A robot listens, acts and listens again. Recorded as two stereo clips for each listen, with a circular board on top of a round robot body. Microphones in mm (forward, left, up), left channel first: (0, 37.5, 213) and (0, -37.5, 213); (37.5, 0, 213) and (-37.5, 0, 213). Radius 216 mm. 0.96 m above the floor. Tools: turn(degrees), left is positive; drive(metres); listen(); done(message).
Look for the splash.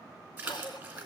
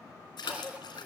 turn(degrees=-20)
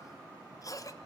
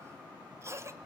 done("Facing where the splash came from. I can't hear it now.")